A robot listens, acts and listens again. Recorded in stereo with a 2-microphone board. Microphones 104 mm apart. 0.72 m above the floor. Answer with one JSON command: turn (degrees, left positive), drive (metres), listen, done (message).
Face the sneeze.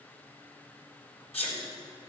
{"turn": 90}
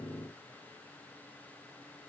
{"done": "I heard a sneeze from this way, but can't make it out now."}